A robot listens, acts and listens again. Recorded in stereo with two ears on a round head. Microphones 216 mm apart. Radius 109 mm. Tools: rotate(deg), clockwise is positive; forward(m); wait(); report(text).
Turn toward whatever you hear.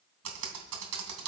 rotate(70)
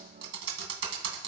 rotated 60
rotate(50)
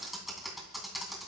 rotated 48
report("Found it: typing on a keyboard, straight ahead.")